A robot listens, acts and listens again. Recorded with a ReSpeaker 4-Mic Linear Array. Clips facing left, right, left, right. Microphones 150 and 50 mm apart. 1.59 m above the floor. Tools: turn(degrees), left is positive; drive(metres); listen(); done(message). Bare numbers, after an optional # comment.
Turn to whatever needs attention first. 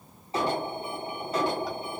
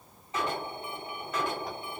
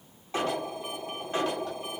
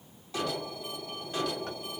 # The alarm: about 35° left or 145° left.
turn(35)
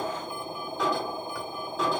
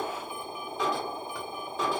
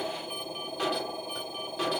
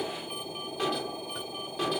done("Facing the alarm, 2 to 4 m away.")